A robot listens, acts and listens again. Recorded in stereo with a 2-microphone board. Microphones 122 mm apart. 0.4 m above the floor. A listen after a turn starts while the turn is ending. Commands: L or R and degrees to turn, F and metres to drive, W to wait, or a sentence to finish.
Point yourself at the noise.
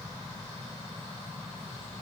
W
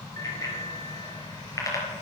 L30
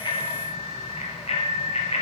L125
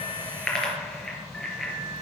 Found it: a bicycle bell, straight ahead, over 4 m away.